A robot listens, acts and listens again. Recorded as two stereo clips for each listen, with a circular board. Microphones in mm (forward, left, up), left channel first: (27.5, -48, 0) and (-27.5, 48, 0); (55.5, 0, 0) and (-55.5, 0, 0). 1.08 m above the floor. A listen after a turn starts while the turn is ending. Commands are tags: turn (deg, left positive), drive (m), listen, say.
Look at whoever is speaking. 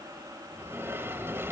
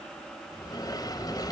<listen/>
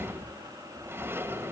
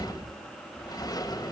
<listen/>
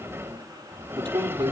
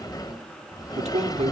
<turn deg="165"/>
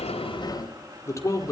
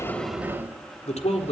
<say>Found it: a man speaking, straight ahead.</say>